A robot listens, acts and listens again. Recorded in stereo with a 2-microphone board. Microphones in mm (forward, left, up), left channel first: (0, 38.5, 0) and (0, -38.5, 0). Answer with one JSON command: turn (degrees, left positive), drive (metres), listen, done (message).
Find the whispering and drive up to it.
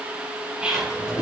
{"turn": -30}
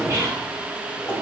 {"listen": true}
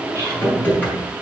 {"listen": true}
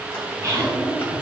{"done": "I heard whispering, but can't make it out now. It was about 15° left or 135° right. I did not reach it."}